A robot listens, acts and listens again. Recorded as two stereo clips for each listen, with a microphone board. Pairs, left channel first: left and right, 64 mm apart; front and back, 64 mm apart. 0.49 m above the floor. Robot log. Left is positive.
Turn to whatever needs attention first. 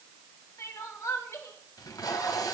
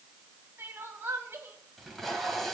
note: The crying: 125° left.
cmd yaw +125
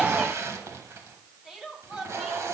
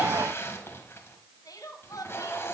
note: The crying is now 10° right.
cmd yaw -10
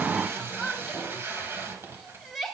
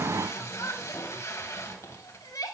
end: Facing the crying.